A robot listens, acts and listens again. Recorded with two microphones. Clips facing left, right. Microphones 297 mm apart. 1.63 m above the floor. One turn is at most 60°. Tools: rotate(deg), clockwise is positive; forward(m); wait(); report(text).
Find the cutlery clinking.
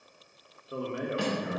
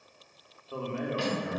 rotate(-55)
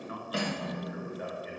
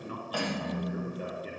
rotate(-30)
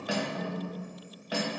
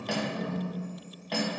rotate(-10)
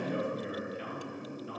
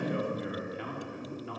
wait()
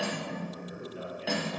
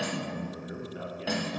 report("Found it: cutlery clinking, straight ahead.")